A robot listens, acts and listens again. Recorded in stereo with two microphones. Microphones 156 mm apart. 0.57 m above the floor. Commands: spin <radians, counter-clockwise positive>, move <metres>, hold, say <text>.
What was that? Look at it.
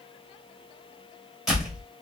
spin -0.52
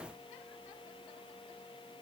hold
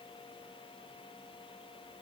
say I heard a door slam, but can't make it out now. It was about 25° left or 145° right.